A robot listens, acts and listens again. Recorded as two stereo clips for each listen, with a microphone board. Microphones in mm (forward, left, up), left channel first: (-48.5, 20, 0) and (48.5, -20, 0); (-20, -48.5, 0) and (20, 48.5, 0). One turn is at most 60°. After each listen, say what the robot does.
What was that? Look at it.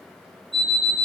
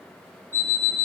Turn 60° right.
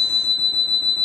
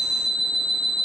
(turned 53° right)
Turn 60° right.
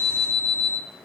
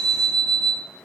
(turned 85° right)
Turn 35° right.
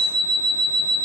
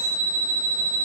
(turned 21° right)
Turn 10° right.
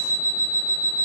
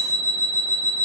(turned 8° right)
Found it: an alarm clock, straight ahead, 1 to 2 m away.